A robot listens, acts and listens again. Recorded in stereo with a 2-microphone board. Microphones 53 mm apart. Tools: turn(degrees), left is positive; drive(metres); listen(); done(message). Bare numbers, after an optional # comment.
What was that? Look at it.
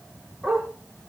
turn(-30)
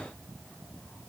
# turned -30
listen()
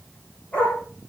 # So it is at 30° left.
turn(30)
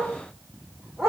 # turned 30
done("Facing the dog barking, over 4 m away.")